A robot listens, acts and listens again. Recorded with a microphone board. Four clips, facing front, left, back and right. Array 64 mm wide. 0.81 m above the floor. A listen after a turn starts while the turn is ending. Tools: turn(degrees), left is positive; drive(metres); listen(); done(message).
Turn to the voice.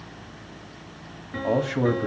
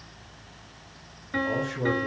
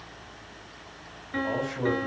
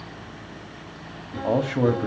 turn(degrees=-65)
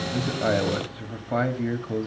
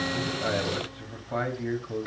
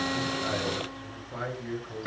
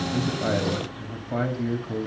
done("Facing the man speaking.")